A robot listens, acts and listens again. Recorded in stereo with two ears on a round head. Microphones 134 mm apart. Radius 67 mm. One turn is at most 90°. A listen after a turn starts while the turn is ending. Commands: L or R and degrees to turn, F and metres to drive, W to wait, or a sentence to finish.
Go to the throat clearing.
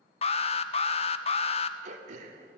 R50
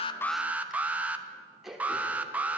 F1.0
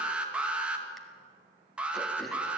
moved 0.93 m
W
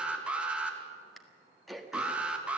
F1.0
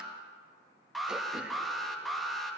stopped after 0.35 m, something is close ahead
W
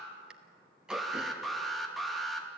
Arrived at the throat clearing, straight ahead.